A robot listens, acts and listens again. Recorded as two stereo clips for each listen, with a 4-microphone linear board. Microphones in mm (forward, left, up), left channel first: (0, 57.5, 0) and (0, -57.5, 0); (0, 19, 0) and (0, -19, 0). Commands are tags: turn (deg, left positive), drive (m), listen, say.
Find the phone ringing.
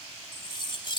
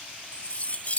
<listen/>
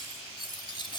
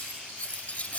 <listen/>
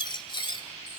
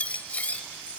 <say>I can't make out a phone ringing to turn to.</say>